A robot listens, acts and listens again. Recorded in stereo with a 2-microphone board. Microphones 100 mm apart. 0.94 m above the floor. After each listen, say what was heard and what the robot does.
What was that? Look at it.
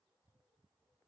Keep listening.
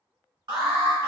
The alarm: about 55° right or 125° right. Turn 55° right.
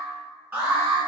So it is at 25° right. Turn 25° right.
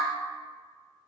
Keep listening.
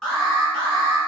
Facing the alarm.